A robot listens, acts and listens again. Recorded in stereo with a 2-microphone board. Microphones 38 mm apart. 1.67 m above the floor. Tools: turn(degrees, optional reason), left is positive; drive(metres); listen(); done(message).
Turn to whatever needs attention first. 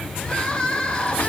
turn(degrees=25, reason="The crying: about 25° left or 155° left.")
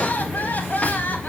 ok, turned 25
turn(degrees=130, reason="So it is at 130° left.")
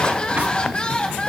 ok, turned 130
turn(degrees=20, reason="The crying is now 20° left.")
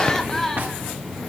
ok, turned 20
done("Found it: crying, straight ahead, 1 to 2 m away.")